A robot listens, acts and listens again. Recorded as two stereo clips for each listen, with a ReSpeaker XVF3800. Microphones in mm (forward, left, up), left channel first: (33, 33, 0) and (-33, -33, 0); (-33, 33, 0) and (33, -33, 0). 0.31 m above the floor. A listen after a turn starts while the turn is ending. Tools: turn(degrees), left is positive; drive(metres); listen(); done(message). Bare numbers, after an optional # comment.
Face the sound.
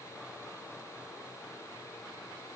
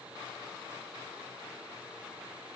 listen()
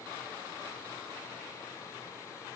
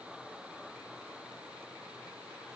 listen()
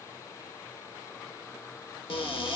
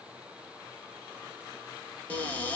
# The cupboard door: 60° left.
turn(60)
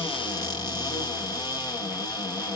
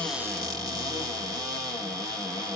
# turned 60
done("Facing the cupboard door, 1 to 2 m away.")